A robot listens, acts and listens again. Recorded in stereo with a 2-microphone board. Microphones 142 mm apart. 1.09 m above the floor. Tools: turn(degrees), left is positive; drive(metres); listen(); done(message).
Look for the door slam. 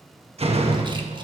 turn(degrees=-45)
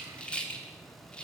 listen()
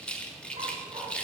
done("I heard a door slam, but can't make it out now. It was about straight ahead or 90° right.")